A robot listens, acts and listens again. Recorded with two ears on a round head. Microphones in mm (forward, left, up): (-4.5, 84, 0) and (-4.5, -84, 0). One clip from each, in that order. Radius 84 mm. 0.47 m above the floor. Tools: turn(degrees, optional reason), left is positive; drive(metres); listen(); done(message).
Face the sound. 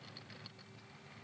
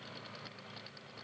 listen()
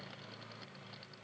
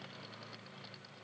listen()
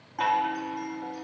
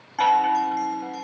turn(degrees=-30, reason="The chime: about 30° right or 150° right.")
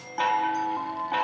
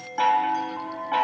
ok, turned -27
done("Found it: a chime, straight ahead.")